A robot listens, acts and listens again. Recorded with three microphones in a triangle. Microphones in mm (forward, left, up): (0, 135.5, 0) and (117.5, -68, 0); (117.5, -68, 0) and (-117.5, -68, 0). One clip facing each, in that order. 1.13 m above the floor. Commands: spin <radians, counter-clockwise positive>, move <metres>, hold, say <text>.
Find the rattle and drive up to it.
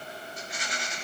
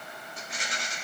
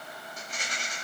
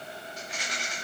spin -0.70
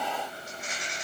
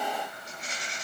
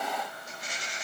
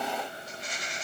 move 1.0
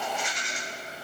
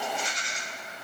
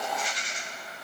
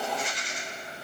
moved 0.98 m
move 1.0
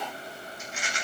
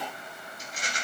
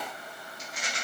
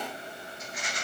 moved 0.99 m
spin -0.17
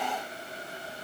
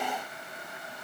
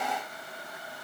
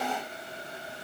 hold
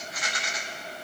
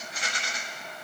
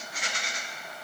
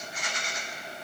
move 1.0
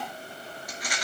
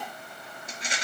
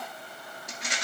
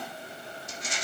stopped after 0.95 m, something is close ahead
say Arrived at the rattle, straight ahead.